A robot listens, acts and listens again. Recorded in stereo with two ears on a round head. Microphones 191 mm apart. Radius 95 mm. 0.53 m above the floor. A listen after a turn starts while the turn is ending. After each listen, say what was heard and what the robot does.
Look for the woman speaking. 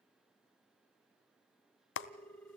Keep listening.
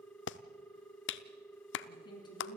The woman speaking: about 20° left or 160° left. Turn 20° left.
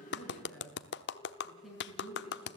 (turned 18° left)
Found it: a woman speaking, straight ahead.